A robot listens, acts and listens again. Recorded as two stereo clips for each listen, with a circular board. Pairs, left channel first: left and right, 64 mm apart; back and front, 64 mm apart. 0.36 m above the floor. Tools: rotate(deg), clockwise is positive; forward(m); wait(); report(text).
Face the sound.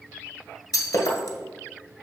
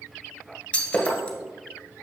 rotate(-110)
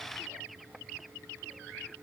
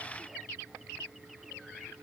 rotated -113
report("Facing where the breaking glass came from. I can't hear it now.")